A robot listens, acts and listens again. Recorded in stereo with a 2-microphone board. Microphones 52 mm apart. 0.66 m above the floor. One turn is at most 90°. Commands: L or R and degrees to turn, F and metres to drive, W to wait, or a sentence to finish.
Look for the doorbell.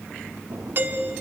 R45
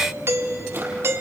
R80
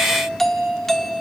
Found it: a doorbell, straight ahead.